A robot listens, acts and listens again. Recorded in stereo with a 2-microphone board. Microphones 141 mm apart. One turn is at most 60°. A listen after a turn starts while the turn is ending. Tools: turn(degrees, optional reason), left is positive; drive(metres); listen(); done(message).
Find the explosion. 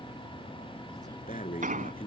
turn(degrees=-60, reason="The explosion: about 70° right or 110° right.")
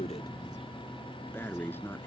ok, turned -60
listen()
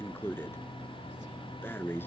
done("I heard an explosion, but can't make it out now. It was about 10° right or 50° right.")